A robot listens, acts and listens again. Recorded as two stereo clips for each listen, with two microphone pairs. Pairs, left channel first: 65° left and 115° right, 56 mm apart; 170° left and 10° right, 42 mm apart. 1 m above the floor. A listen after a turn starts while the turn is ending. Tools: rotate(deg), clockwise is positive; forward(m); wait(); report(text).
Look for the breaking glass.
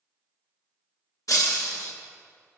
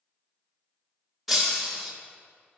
rotate(-75)
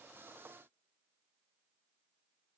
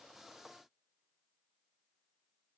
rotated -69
rotate(-10)
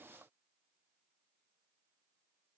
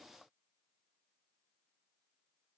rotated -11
report("Facing where the breaking glass came from. I can't hear it now.")